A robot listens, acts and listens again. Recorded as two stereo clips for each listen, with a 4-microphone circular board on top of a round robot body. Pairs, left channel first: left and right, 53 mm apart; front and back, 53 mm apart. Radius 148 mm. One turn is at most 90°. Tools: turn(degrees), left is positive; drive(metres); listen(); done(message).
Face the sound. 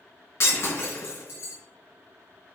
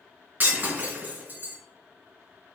turn(degrees=90)
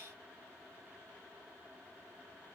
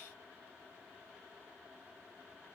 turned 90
turn(degrees=35)
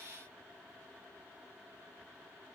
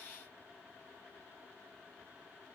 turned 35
done("I heard breaking glass from this way, but can't make it out now.")